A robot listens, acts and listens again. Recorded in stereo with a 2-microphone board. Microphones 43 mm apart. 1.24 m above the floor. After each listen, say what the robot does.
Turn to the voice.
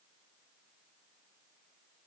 Keep listening.
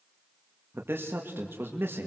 Turn 60° right.
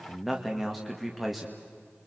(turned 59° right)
Facing the man speaking, 1 to 2 m away.